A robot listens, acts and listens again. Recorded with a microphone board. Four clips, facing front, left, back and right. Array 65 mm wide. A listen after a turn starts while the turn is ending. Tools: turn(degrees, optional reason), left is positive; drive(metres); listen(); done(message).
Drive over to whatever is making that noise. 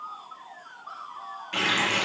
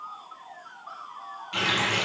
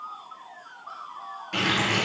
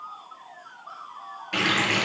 turn(degrees=-80, reason="The running tap: 80° right.")
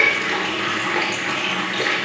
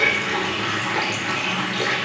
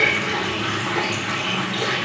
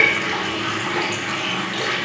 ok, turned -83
drive(metres=1.0)
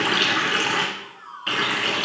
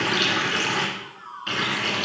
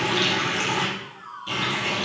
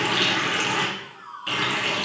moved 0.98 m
turn(degrees=10, reason="The running tap is now 10° left.")
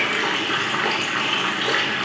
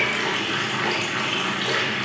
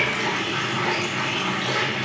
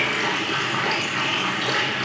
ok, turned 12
drive(metres=1.0)
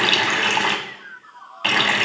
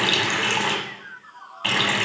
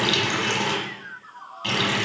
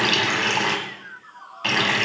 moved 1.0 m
turn(degrees=-10, reason="The running tap is now 10° right.")
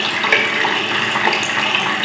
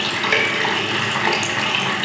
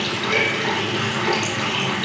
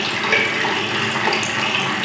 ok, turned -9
drive(metres=1.0)
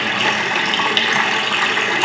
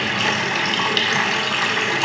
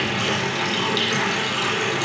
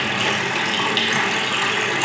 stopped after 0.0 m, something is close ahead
turn(degrees=10, reason="The running tap is now 10° left.")
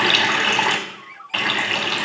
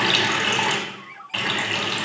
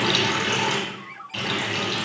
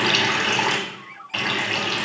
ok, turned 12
done("Arrived at the running tap, straight ahead.")